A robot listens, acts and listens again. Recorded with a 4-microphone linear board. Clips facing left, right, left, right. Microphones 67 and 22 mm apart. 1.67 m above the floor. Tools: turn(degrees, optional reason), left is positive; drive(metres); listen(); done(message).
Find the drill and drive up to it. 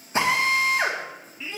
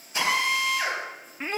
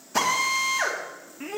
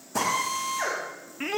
turn(degrees=35, reason="The drill: about 35° left or 145° left.")
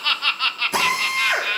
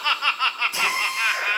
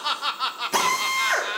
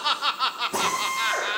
turn(degrees=110, reason="So it is at 110° left.")
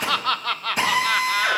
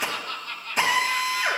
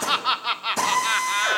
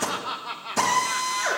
drive(metres=1.0)
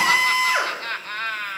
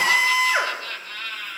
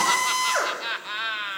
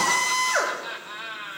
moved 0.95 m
drive(metres=1.0)
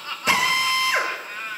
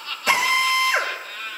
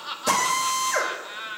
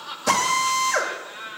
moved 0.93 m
drive(metres=1.0)
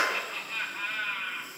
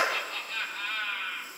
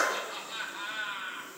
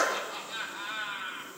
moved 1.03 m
drive(metres=1.0)
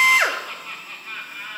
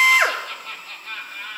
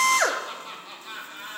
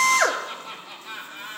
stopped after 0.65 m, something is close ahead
done("I am next to the drill.")